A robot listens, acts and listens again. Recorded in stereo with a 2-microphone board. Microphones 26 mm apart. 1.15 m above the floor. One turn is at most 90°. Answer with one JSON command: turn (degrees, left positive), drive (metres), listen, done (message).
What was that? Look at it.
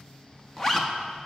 {"turn": 20}
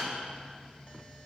{"listen": true}
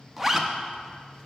{"done": "Found it: a zipper, straight ahead."}